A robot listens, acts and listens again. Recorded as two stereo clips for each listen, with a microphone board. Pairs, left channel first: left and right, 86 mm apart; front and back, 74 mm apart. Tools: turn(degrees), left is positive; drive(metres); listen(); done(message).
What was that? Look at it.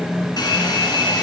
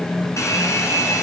turn(degrees=50)
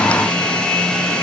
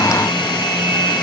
turn(degrees=10)
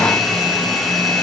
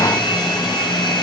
done("Facing the hair dryer, 2 to 4 m away.")